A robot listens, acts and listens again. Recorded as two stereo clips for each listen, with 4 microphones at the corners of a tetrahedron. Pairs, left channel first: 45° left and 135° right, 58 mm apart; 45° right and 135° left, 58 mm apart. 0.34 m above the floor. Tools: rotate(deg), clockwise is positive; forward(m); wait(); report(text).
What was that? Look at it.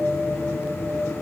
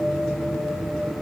wait()
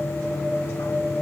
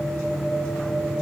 wait()
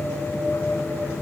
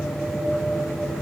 report("I can't make out anything.")